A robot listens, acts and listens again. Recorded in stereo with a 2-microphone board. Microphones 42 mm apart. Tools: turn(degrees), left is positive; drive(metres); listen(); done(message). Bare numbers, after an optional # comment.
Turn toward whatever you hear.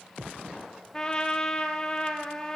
# The trumpet: about 20° left or 160° left.
turn(20)
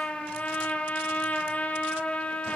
# So it is at 140° left.
turn(140)
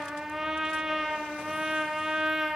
# The trumpet is now 15° right.
turn(-15)
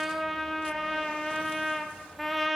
done("Facing the trumpet.")